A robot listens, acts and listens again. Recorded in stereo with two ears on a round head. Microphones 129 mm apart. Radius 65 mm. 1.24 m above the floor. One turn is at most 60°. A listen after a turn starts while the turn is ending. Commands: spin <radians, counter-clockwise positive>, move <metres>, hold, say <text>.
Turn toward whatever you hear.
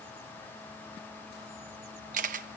spin -1.05
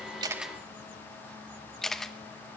say Facing the camera shutter.